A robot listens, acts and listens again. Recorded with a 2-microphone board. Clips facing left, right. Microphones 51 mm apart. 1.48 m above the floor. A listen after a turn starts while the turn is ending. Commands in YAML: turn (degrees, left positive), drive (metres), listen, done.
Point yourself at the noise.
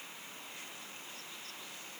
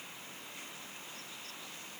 listen: true
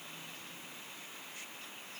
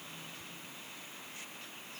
listen: true
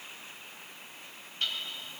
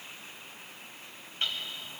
turn: -25
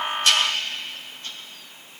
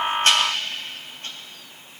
listen: true
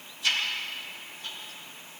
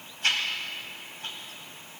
turn: -130
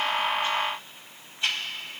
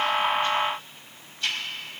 turn: 25
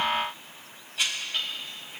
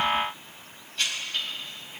turn: 15
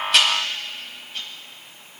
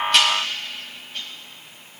listen: true
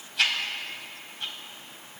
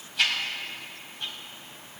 done: "Facing the ticking."